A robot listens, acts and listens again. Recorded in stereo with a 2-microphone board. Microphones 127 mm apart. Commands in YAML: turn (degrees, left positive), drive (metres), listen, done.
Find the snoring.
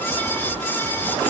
listen: true
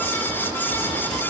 listen: true
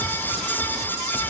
done: "I can't make out snoring."